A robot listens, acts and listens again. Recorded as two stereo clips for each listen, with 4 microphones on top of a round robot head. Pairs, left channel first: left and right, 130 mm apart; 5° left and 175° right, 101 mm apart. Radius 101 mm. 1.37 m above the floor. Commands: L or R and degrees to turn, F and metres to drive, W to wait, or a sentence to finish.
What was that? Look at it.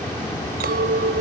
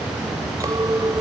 R105
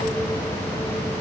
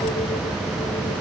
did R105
W
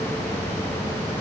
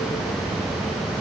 W
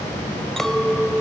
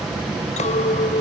Found it: a clink, straight ahead.